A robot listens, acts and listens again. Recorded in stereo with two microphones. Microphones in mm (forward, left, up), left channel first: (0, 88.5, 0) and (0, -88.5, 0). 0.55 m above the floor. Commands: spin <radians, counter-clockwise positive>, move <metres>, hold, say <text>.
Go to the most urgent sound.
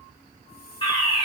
spin 0.52
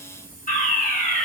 spin 2.01
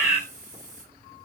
move 1.0
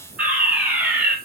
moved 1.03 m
spin -0.26
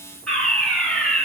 move 1.0
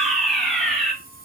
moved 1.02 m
move 1.0
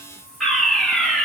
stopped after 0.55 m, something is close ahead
say Arrived at the fire alarm, straight ahead.